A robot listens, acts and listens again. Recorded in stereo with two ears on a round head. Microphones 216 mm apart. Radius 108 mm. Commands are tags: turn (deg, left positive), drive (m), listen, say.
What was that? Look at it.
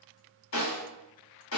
<turn deg="60"/>
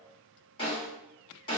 <turn deg="25"/>
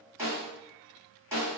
<turn deg="-10"/>
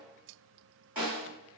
<say>Facing the snare drum, 1 to 2 m away.</say>